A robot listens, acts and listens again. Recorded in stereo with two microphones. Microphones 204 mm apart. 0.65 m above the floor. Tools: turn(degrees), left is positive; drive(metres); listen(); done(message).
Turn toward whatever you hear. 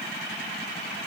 listen()
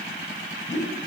turn(degrees=35)
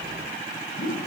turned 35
turn(degrees=105)
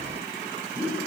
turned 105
done("Found it: a whoosh, straight ahead, 2 to 4 m away.")